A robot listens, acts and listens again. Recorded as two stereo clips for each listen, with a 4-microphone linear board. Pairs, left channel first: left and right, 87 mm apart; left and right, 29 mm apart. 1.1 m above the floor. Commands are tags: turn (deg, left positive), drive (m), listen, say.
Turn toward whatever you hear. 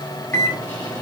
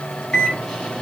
<turn deg="20"/>
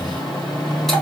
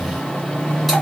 <say>Found it: a microwave, straight ahead, 2 to 4 m away.</say>